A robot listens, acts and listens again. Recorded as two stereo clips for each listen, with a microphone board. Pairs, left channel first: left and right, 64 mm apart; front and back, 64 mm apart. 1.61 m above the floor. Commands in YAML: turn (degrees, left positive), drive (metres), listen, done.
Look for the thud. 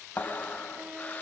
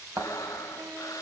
turn: 150
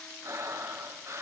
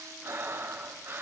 done: "I heard a thud from this way, but can't make it out now."